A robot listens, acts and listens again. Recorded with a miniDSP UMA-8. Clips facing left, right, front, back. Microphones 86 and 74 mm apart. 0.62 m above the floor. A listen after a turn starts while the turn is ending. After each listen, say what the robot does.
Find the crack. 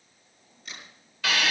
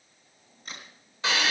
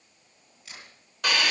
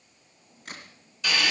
Turn 140° right.
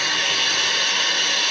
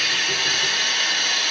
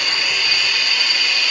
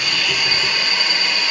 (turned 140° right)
I heard a crack from this way, but can't make it out now.